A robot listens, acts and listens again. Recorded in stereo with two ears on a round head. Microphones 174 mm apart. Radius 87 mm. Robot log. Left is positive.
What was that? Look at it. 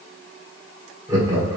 note: The laughter: about 20° right or 160° right.
cmd yaw -20
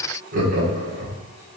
note: So it is at 130° right.
cmd yaw -130
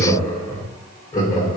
note: The laughter is now 20° left.
cmd yaw +20
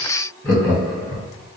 end: Facing the laughter, 1 to 2 m away.